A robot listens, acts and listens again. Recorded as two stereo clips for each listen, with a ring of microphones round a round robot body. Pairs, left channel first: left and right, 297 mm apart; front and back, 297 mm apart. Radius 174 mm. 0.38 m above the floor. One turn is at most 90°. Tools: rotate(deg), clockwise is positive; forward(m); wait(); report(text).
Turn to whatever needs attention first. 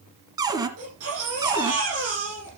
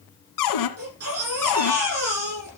rotate(90)
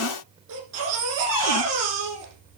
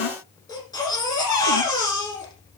rotate(80)
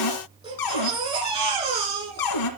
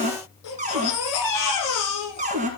rotate(20)
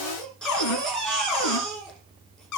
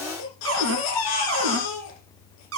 report("Facing the baby crying, over 4 m away.")